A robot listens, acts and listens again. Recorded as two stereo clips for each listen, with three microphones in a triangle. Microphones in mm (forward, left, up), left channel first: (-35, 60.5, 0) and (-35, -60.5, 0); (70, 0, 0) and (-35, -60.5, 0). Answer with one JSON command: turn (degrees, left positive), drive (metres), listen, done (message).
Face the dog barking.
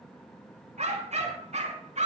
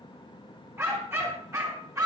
{"turn": -90}
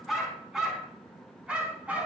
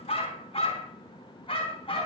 {"turn": -10}
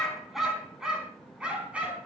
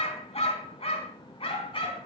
{"turn": -10}
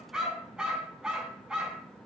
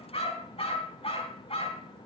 {"done": "Found it: a dog barking, straight ahead."}